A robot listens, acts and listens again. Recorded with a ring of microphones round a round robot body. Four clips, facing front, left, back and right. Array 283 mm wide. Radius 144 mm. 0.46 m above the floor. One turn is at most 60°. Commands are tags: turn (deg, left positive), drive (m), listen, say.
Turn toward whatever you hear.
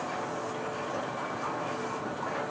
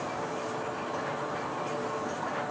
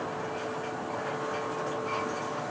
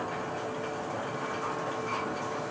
<listen/>
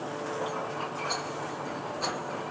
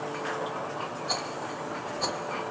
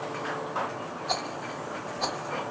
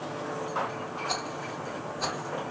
<turn deg="-60"/>
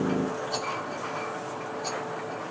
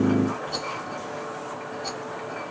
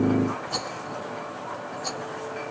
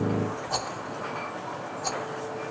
<turn deg="-60"/>
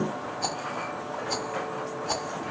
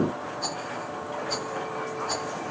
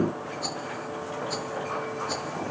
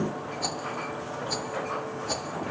<turn deg="-35"/>
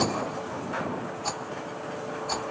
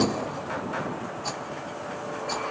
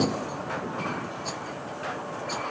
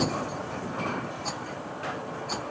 <turn deg="10"/>
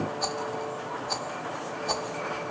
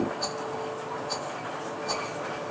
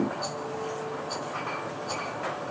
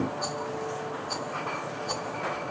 <say>Facing the rattle, 1 to 2 m away.</say>